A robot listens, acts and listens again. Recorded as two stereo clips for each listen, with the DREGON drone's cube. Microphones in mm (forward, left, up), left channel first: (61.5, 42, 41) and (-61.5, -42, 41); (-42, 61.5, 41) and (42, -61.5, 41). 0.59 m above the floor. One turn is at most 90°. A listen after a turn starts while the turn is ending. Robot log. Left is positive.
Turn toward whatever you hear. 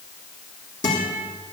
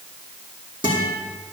end: Found it: a guitar, straight ahead, over 4 m away.